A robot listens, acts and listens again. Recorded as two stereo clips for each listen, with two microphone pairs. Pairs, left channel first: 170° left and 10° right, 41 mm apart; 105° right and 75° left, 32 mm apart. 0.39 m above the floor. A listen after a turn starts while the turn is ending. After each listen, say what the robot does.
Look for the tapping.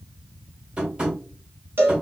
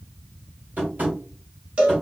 Turn 55° left.
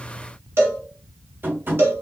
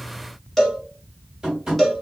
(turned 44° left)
Turn 10° left.
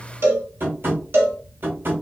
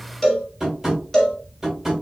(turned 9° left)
Facing the tapping.